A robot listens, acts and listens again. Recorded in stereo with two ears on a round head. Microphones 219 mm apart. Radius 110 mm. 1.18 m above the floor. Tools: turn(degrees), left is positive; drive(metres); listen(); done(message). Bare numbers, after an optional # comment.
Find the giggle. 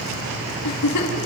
turn(90)
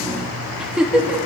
done("Facing the giggle, 2 to 4 m away.")